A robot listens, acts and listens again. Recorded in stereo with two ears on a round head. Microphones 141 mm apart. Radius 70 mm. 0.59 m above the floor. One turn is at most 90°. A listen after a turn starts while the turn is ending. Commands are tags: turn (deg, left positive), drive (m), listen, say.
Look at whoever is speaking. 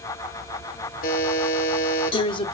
<turn deg="30"/>
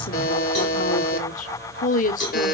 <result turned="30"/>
<turn deg="90"/>
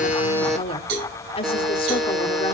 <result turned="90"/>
<turn deg="40"/>
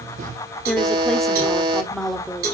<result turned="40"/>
<say>Facing the woman speaking.</say>